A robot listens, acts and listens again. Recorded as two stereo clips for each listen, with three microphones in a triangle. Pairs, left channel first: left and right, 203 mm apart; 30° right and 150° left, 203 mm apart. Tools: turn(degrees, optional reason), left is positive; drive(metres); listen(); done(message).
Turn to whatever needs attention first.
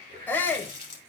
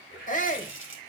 turn(degrees=10, reason="The shout: 10° left.")
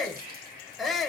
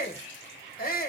done("Found it: a shout, straight ahead, 1 to 2 m away.")